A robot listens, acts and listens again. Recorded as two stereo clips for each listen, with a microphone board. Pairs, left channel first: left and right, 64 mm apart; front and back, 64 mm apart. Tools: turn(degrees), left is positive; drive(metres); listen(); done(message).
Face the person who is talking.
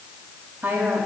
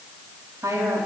turn(degrees=-145)
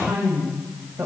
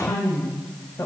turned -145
turn(degrees=-45)
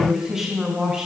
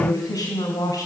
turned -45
turn(degrees=-15)
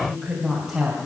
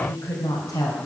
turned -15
turn(degrees=-15)
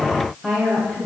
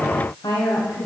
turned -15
turn(degrees=-10)
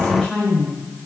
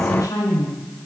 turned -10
done("Found it: a woman speaking, straight ahead, 2 to 4 m away.")